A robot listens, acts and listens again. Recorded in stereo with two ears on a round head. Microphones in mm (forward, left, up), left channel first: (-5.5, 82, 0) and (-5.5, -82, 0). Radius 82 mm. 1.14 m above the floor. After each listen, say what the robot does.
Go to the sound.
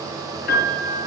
Turn 60° left.
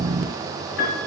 Turn 60° left.
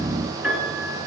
Drive 1.0 m forward.
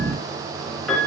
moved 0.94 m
Drive 1.0 m forward.
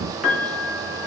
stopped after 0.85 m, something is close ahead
I am next to the piano.